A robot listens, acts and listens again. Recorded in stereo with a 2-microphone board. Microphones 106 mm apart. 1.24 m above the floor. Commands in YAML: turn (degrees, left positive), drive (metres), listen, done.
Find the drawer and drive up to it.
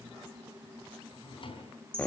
turn: 55
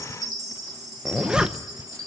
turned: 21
listen: true
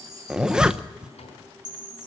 turn: 100
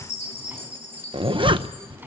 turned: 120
turn: -20
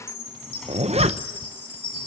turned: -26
listen: true
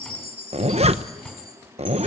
listen: true
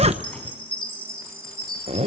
done: "I heard a drawer from this way, but can't make it out now. I did not reach it."